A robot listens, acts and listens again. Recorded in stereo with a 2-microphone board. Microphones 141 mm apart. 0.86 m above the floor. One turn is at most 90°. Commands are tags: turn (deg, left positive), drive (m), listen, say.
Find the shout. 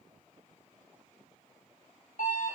<listen/>
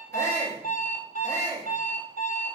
<turn deg="20"/>
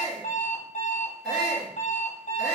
<say>Facing the shout, 1 to 2 m away.</say>